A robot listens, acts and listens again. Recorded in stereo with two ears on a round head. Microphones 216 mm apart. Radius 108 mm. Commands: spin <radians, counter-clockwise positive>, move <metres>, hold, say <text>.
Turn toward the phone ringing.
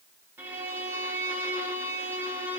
hold
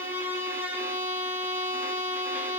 hold
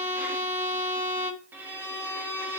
say I can't make out a phone ringing to turn to.